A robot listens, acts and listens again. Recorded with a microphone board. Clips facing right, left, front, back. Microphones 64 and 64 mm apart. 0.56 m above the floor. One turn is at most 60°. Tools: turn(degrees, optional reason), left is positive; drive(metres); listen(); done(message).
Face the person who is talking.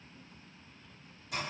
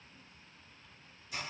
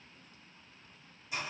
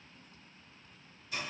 listen()
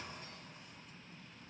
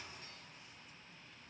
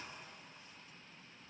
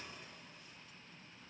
listen()
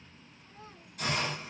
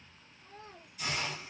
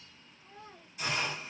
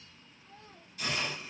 turn(degrees=60, reason="The child speaking: 65° left.")
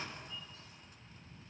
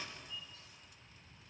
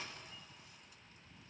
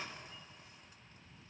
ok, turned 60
listen()
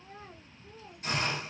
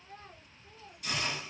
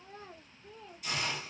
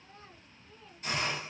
done("Found it: a child speaking, straight ahead.")